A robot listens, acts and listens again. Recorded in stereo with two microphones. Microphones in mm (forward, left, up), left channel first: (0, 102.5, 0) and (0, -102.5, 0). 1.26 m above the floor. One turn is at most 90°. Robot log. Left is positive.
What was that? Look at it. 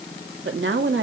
note: The woman speaking: about 70° right or 110° right.
cmd yaw -70
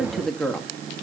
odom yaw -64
end: Found it: a woman speaking, straight ahead.